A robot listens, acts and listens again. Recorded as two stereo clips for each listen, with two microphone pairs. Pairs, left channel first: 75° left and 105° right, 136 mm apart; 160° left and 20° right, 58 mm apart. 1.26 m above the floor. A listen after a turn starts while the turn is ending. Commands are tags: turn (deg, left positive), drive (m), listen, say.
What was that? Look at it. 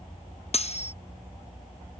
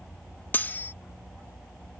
<turn deg="105"/>
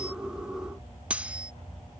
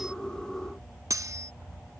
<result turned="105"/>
<turn deg="-25"/>
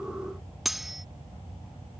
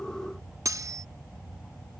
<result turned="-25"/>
<turn deg="-15"/>
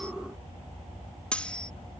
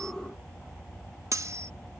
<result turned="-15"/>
<say>Found it: cutlery clinking, straight ahead.</say>